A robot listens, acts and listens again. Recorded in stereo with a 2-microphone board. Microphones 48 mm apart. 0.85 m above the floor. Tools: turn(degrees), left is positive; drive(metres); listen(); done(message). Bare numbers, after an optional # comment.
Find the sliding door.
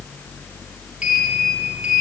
# The sliding door: about 20° right or 160° right.
turn(-20)
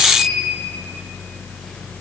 done("Found it: a sliding door, straight ahead, over 4 m away.")